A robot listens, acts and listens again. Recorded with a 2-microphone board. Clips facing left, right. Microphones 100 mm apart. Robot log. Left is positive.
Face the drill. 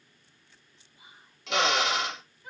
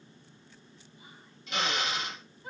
cmd yaw +90
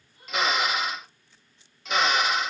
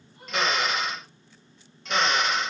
end: Found it: a drill, straight ahead.